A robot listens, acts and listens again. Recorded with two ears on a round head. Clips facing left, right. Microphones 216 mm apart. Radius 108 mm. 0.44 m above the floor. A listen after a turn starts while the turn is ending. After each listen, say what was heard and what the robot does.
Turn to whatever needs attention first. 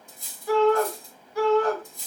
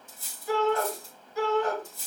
The shout: about 60° left or 120° left. Turn 60° left.
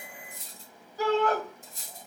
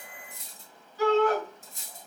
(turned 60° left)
So it is at 40° left. Turn 40° left.
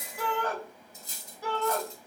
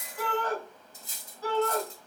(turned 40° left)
The shout is now 15° left. Turn 15° left.
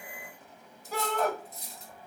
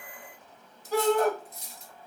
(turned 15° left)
Found it: a shout, straight ahead.